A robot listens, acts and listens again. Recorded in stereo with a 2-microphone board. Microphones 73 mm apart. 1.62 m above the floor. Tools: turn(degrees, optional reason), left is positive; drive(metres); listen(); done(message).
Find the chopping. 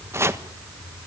turn(degrees=-35, reason="The chopping: about 35° right or 145° right.")
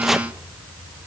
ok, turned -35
done("Facing the chopping.")